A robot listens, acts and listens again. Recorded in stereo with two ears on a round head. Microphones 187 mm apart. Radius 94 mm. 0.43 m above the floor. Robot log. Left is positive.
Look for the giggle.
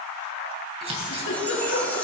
note: The giggle: about 70° left or 110° left.
cmd yaw +70
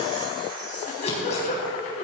note: So it is at 40° left.
cmd yaw +40
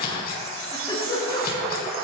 note: The giggle is now 20° left.
cmd yaw +20
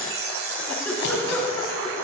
note: The giggle is now 10° left.
cmd yaw +10
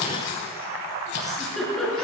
end: Facing the giggle.